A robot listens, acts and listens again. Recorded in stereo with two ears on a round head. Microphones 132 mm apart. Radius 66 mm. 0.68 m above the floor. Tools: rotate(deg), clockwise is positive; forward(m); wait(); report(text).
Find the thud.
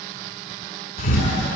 rotate(-60)
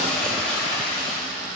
wait()
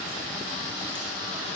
report("I heard a thud, but can't make it out now. It was about straight ahead or 60° left.")